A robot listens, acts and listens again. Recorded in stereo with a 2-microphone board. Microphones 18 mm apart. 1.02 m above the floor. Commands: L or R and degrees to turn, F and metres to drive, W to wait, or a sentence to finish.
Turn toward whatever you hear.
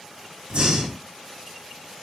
R70
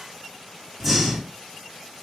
Found it: breathing, straight ahead, 1 to 2 m away.